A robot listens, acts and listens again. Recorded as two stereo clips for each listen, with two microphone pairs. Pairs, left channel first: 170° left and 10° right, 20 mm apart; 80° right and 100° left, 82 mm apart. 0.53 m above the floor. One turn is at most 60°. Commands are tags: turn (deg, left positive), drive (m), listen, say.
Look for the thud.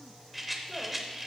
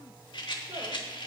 <listen/>
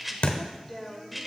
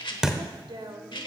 <turn deg="60"/>
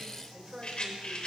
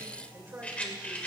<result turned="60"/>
<turn deg="60"/>
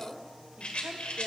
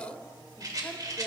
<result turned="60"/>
<turn deg="60"/>
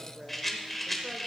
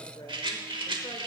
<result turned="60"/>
<say>I heard a thud from this way, but can't make it out now.</say>